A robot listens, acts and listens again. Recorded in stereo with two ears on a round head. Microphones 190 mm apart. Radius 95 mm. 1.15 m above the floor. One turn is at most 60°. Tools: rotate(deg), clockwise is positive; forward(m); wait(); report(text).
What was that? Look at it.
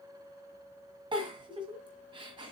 rotate(25)
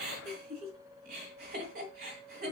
rotate(60)
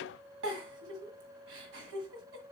rotate(60)
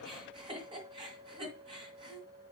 rotate(25)
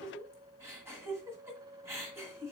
rotate(15)
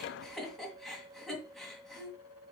report("Facing the giggle, 1 to 2 m away.")